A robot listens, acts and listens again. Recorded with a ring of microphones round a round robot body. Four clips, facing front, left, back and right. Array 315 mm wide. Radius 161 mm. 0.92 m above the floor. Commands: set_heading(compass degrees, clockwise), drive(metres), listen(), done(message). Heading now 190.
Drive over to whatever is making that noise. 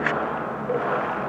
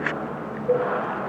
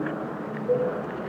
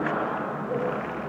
set_heading(85)
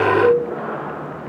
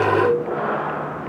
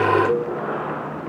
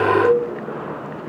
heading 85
drive(1.0)
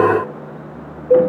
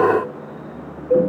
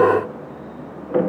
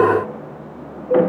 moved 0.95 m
drive(1.0)
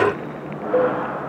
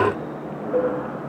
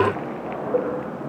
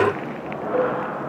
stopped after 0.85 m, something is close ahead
set_heading(70)
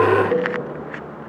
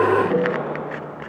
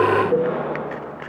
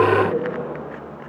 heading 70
done("I am next to the cowbell.")